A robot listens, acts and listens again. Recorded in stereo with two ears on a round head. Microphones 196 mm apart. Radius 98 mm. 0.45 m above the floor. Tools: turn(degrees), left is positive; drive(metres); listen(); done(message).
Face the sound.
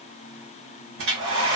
turn(degrees=-70)
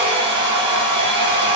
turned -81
turn(degrees=-30)
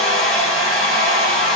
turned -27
done("Found it: a hair dryer, straight ahead.")